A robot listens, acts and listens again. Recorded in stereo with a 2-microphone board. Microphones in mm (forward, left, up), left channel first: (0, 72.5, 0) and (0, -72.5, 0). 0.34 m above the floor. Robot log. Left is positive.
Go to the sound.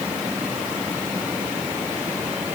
cmd idle
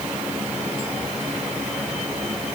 cmd idle
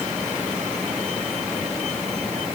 end: I can't make out anything to turn to.